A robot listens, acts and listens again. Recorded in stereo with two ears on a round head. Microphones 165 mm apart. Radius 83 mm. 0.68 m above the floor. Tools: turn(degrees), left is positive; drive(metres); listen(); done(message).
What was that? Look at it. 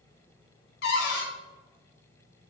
turn(degrees=60)
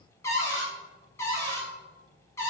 turn(degrees=15)
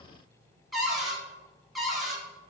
done("Found it: a cupboard door, straight ahead, under 1 m away.")